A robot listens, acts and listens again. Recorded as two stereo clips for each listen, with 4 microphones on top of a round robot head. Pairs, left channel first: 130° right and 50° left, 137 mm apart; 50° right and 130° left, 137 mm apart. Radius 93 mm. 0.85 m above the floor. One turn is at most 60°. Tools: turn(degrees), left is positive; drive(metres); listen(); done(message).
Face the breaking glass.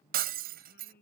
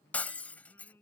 turn(degrees=30)
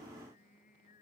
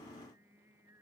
done("I heard breaking glass from this way, but can't make it out now.")